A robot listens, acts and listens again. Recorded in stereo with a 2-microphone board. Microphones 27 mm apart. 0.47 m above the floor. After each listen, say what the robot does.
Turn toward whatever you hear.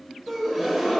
Turn 30° left.
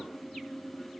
Keep listening.
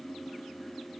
I heard a gasp, but can't make it out now. It was about 25° right or 145° left.